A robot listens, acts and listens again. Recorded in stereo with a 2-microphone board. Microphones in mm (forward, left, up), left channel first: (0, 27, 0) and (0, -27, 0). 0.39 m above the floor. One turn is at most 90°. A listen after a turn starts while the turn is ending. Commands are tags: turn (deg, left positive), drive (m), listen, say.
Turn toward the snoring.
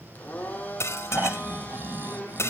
<turn deg="-40"/>
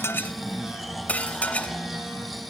<say>Facing the snoring, 1 to 2 m away.</say>